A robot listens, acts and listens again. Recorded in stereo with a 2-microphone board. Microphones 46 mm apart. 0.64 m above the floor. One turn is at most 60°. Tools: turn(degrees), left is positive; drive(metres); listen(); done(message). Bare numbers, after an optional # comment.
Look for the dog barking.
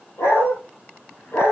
turn(60)
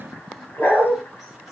# So it is at 50° left.
turn(50)
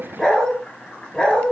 # The dog barking is now 20° left.
turn(20)
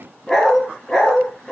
# The dog barking is now 10° left.
turn(10)
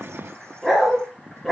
done("Facing the dog barking.")